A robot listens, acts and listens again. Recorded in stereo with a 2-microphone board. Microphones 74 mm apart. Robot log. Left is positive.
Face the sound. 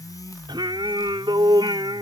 note: The singing: about 75° right or 105° right.
cmd yaw -75
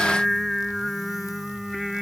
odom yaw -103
end: Found it: singing, straight ahead.